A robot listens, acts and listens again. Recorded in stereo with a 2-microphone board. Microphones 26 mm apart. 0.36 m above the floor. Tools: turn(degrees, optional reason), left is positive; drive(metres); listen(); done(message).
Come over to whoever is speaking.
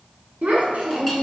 turn(degrees=-75, reason="The child speaking: about 75° right or 105° right.")
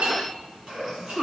turn(degrees=-30, reason="So it is at 30° right.")
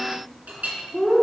drive(metres=1.0)
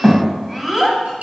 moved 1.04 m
drive(metres=1.0)
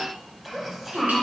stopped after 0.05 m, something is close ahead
done("I am next to the child speaking.")